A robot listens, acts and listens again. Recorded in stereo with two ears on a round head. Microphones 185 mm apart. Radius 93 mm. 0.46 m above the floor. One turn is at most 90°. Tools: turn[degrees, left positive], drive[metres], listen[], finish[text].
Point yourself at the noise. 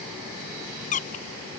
Thought: The squeak: about 40° left or 140° left.
Action: turn[40]
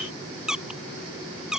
Action: finish[Facing the squeak.]